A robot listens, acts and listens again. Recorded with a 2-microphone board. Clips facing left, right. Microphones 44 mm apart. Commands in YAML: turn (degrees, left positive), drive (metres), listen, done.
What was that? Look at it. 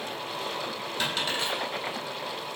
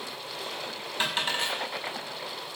turn: -25
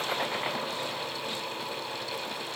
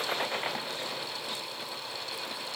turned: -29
listen: true
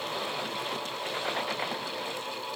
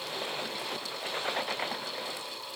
done: "I heard a dropped coin, but can't make it out now. It was about 5° left or 125° right."